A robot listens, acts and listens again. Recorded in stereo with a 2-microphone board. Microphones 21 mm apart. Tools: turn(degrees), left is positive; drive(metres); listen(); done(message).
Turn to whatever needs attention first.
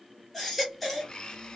turn(degrees=30)
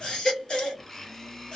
turn(degrees=150)
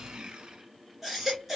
done("Facing the baby crying.")